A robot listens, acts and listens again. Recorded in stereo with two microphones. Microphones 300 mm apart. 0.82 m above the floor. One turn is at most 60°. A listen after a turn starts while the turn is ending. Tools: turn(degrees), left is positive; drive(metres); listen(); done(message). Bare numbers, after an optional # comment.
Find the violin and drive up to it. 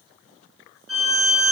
# The violin: about 50° left or 130° left.
turn(50)
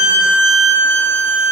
drive(1.0)
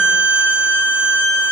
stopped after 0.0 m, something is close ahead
done("Blocked. The violin is further on, straight ahead.")